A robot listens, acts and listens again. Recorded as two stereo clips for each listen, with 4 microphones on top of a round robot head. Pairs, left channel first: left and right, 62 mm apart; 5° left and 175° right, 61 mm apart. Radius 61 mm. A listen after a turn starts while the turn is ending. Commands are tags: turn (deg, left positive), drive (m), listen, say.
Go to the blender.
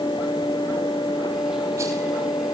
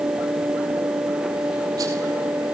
<listen/>
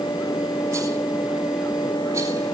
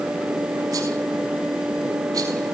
<listen/>
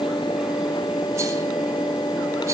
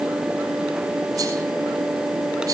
<say>I can't make out a blender to turn to.</say>